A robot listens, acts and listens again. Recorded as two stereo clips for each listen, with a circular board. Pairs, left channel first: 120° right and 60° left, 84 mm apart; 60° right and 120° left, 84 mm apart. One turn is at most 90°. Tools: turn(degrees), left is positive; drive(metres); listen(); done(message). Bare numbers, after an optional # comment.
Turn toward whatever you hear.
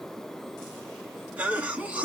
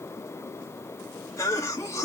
# The cough: 10° right.
turn(-10)
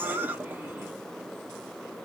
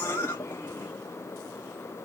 done("Facing the cough.")